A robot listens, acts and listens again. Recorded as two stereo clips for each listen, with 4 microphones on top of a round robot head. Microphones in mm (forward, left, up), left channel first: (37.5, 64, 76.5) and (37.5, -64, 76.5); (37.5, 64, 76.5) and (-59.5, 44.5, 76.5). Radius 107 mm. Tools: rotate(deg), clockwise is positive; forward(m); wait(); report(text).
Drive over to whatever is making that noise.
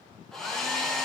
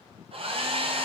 rotate(-175)
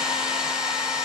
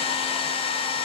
forward(1.0)
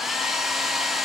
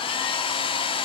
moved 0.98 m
forward(1.0)
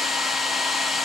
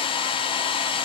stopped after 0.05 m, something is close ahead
report("I am next to the hair dryer.")